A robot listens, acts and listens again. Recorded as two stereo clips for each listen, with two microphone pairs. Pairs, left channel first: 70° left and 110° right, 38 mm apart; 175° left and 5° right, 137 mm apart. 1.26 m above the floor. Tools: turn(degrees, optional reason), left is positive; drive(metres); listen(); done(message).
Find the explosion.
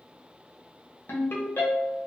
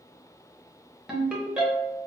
listen()
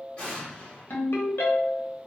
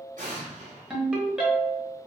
turn(degrees=10, reason="The explosion: 10° left.")
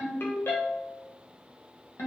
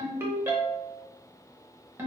done("I heard an explosion from this way, but can't make it out now.")